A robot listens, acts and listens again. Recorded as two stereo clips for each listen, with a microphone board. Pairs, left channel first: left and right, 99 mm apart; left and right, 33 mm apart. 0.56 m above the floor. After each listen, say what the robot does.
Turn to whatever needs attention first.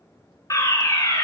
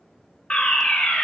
Turn 30° left.
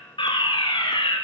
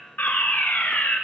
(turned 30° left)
Turn 115° left.
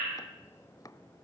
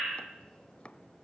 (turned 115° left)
Keep listening.
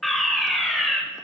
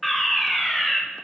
Found it: a fire alarm, straight ahead, over 4 m away.